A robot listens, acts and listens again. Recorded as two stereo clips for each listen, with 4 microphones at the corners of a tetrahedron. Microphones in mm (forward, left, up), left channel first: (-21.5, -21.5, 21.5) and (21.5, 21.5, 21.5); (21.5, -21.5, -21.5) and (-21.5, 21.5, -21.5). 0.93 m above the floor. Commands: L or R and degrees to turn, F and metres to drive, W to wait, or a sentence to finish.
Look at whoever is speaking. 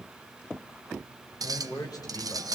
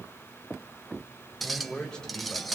R125
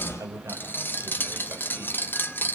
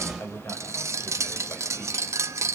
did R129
Facing the man speaking.